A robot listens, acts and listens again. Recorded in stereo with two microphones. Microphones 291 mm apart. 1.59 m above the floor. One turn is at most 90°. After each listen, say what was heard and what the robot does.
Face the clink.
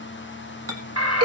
The clink: about 55° right or 125° right. Turn 55° right.
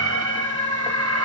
Keep listening.
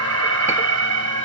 Keep listening.
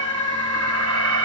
I heard a clink, but can't make it out now. It was about straight ahead or 70° right.